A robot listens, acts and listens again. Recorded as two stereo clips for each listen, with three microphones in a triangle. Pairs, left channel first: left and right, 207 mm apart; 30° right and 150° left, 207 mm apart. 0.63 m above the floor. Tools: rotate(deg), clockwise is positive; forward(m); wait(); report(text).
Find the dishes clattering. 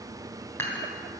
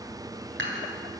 rotate(-170)
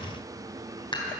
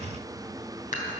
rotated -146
rotate(-20)
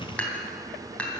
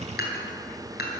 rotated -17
report("Found it: dishes clattering, straight ahead, 2 to 4 m away.")